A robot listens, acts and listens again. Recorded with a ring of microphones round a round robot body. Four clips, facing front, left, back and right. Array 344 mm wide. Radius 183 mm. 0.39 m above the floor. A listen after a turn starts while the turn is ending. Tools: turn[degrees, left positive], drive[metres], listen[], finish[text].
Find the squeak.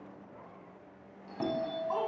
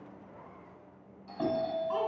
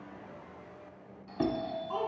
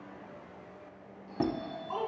Thought: The squeak: 100° right.
Action: turn[-100]
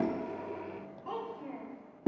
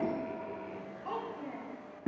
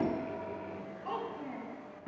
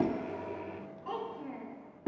Thought: The squeak is now 20° left.
Action: turn[20]
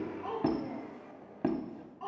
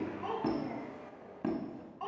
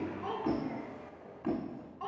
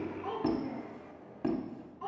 Action: finish[Facing the squeak, 1 to 2 m away.]